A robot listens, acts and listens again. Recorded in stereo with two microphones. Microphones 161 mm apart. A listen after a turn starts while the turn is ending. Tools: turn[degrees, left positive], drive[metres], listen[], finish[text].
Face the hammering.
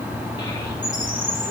Action: listen[]
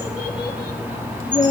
Action: listen[]
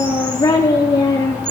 Action: finish[I can't make out hammering to turn to.]